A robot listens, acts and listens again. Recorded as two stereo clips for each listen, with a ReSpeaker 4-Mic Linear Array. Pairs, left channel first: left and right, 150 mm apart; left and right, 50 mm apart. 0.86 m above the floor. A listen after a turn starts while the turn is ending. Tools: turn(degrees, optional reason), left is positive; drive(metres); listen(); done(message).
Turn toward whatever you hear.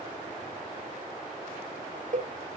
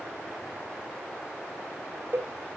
turn(degrees=-55, reason="The cowbell: about 55° right or 125° right.")
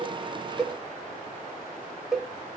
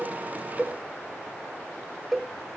done("Facing the cowbell, under 1 m away.")